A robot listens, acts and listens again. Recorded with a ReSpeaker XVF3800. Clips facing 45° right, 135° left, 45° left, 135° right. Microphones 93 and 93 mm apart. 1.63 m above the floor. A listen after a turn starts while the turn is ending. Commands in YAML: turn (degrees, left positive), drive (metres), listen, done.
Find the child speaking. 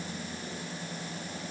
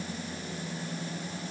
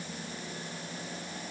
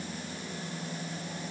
listen: true
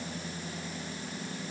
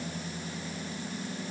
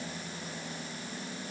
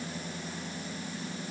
listen: true
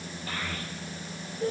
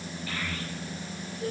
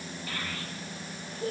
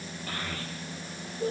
turn: -95
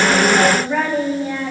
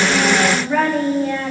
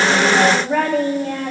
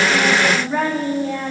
turn: 30
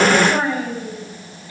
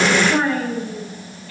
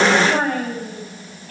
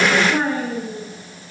turn: 25
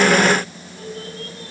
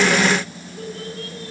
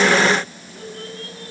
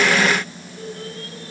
done: "Found it: a child speaking, straight ahead, over 4 m away."